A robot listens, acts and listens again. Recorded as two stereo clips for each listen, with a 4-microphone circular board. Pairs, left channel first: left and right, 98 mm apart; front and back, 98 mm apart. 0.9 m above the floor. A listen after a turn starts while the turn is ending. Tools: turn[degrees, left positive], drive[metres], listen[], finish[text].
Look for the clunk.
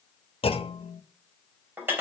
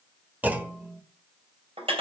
Thought: The clunk: 105° left.
Action: turn[105]
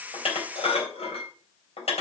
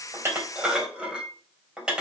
Action: finish[Facing where the clunk came from. I can't hear it now.]